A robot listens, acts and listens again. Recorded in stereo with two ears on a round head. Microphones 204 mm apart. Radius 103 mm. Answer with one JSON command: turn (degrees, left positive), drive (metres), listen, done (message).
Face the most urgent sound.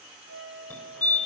{"turn": 30}
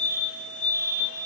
{"turn": 140}
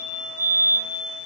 {"turn": -10}
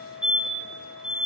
{"done": "Facing the fire alarm, 2 to 4 m away."}